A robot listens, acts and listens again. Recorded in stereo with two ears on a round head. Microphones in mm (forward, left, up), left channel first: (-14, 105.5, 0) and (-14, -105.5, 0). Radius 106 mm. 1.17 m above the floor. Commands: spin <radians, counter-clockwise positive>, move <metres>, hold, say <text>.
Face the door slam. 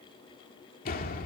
spin 0.70
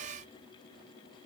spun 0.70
hold
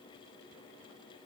say I heard a door slam, but can't make it out now. It was about straight ahead or 100° left.